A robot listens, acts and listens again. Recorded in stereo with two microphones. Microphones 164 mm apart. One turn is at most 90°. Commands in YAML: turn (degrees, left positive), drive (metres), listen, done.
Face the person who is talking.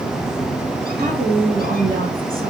turn: -60
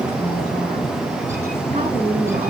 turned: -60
turn: -60
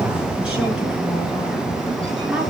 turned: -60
listen: true
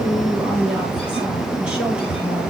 turn: -10
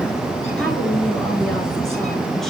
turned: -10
done: "Found it: a woman speaking, straight ahead, over 4 m away."